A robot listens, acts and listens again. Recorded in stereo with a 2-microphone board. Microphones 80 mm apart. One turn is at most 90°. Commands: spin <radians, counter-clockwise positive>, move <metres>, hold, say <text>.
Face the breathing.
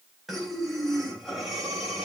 spin 0.52
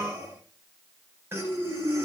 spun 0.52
spin -0.52
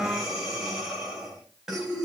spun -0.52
say Facing the breathing.